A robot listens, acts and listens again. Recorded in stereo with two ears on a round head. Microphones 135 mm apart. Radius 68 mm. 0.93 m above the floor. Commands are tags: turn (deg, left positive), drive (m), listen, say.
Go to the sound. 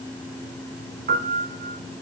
<turn deg="-55"/>
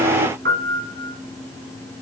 <turn deg="-70"/>
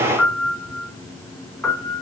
<drive m="1.0"/>
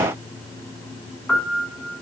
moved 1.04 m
<turn deg="10"/>
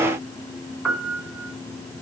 <drive m="1.0"/>
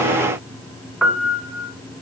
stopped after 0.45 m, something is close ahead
<say>I am next to the piano.</say>